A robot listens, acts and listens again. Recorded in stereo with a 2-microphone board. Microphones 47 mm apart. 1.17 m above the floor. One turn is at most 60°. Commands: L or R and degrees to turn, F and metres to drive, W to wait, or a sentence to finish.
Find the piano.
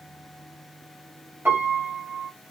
R50
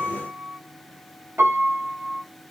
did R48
R60
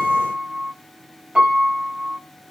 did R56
R20
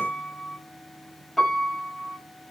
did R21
Facing the piano.